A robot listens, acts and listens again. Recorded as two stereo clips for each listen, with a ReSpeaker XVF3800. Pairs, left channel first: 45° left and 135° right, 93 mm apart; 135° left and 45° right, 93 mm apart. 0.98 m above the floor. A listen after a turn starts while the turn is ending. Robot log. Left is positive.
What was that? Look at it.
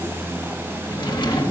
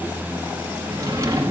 note: The drawer: 10° left.
cmd yaw +10
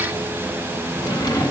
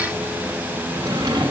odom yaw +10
end: Facing the drawer.